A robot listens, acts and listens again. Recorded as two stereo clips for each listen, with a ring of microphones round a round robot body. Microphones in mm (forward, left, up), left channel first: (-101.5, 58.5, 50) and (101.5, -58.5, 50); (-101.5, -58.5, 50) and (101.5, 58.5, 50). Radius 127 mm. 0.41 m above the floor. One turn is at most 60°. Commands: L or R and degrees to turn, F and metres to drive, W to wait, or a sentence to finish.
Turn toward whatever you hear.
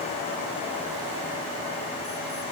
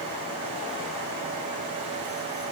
W
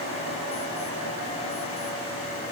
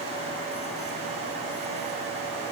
W
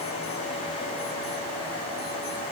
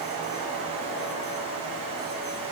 I can't make out anything to turn to.